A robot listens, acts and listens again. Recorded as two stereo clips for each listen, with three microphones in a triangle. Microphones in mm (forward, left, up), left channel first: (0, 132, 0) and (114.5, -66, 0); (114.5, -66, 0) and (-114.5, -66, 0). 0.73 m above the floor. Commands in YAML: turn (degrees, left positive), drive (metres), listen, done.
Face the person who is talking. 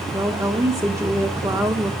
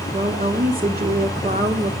turn: -135
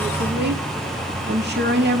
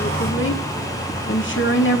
turn: -25
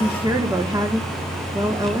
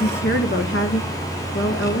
turn: 15
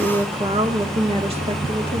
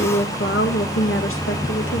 done: "Found it: a woman speaking, straight ahead."